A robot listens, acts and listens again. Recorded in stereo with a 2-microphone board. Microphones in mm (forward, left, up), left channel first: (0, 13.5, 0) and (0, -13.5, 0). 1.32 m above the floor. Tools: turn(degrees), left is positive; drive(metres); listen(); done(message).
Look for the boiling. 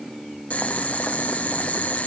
turn(degrees=65)
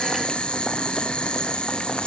turn(degrees=45)
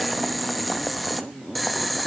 done("Facing the boiling.")